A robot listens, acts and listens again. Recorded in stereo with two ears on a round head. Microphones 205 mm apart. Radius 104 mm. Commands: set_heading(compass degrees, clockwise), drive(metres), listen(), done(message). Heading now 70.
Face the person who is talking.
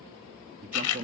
set_heading(105)
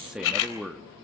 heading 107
done("Facing the man speaking, under 1 m away.")